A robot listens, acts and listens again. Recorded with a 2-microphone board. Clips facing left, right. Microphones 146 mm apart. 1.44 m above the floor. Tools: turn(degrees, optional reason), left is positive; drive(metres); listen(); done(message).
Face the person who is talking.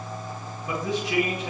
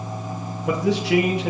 turn(degrees=-90)
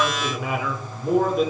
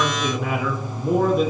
done("Found it: a man speaking, straight ahead, 2 to 4 m away.")